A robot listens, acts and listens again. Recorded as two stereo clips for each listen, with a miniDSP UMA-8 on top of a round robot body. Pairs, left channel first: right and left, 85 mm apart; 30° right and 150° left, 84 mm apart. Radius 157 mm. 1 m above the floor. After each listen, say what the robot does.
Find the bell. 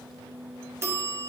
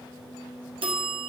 Turn 150° left.
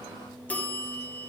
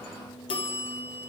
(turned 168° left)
Turn 15° right.
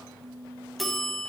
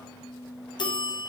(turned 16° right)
Found it: a bell, straight ahead.